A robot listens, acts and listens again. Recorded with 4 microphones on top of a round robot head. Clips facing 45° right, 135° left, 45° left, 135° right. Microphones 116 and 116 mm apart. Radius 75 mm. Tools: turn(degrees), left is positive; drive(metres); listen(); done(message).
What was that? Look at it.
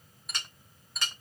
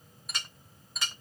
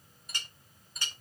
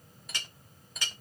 turn(degrees=-135)
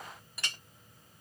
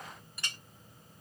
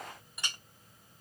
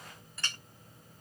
turn(degrees=-35)
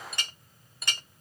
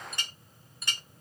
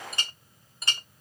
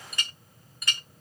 turn(degrees=-15)
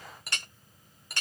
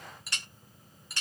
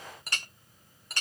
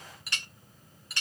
done("Found it: a clink, straight ahead.")